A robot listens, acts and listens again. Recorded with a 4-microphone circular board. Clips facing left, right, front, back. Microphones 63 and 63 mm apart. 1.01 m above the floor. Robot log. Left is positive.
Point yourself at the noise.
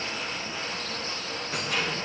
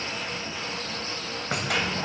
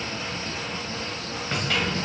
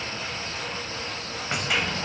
note: The keys jangling: 105° right.
cmd yaw -105
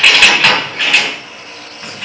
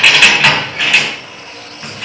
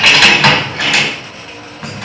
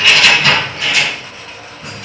end: Facing the keys jangling.